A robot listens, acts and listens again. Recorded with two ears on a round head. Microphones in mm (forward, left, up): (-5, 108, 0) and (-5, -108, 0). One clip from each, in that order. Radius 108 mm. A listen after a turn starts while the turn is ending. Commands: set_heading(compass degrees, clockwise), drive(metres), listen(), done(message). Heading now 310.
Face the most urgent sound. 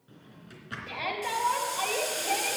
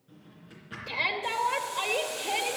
set_heading(350)
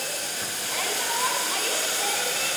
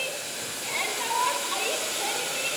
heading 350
set_heading(0)
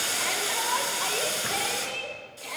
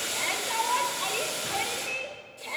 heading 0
done("Facing the shout, 1 to 2 m away.")